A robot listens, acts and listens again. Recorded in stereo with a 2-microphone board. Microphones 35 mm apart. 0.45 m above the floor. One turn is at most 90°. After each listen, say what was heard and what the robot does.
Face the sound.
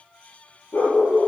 The dog barking: about 45° left or 135° left. Turn 45° left.
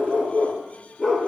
Found it: a dog barking, straight ahead, 2 to 4 m away.